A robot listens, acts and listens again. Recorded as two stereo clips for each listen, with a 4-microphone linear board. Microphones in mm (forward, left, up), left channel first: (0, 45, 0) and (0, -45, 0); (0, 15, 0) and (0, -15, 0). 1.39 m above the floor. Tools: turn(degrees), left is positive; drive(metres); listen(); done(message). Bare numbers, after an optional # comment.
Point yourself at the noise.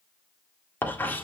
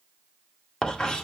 # The writing: about 20° left or 160° left.
turn(20)
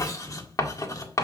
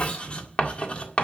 # So it is at 135° left.
turn(135)
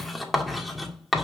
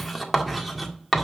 done("Found it: writing, straight ahead.")